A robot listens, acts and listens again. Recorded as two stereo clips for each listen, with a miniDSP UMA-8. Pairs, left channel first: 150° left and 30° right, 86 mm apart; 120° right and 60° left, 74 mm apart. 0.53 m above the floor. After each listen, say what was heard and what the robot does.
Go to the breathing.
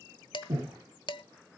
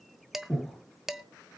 The breathing: 40° right. Turn 40° right.
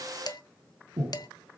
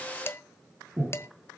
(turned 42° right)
Drive 1.0 m forward.
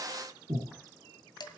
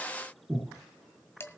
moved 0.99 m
Drive 1.0 m forward.
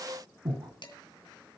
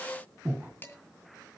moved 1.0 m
Drive 1.0 m forward.
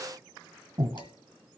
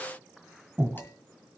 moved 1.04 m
Drive 1.0 m forward.
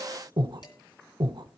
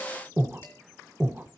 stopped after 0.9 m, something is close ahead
The breathing is now 10° right. Turn 10° right.
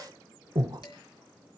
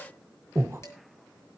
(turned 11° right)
Arrived at the breathing, straight ahead.